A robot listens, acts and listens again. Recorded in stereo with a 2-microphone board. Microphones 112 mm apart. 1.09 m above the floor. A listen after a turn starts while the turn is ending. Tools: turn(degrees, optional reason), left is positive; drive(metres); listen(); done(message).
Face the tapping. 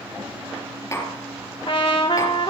turn(degrees=25, reason="The tapping: about 25° left or 155° left.")
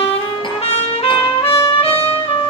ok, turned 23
listen()
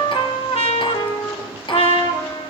turn(degrees=130, reason="So it is at 130° left.")
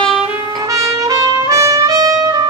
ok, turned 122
turn(degrees=10, reason="Nothing new. It was at 10° left.")
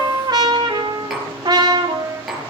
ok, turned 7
done("Found it: tapping, straight ahead, over 4 m away.")